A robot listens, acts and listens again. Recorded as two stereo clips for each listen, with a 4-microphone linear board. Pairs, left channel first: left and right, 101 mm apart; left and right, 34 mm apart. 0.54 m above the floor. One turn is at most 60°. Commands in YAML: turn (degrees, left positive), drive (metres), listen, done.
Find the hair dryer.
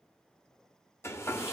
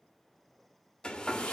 turn: 30
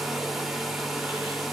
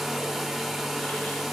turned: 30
done: "Facing the hair dryer."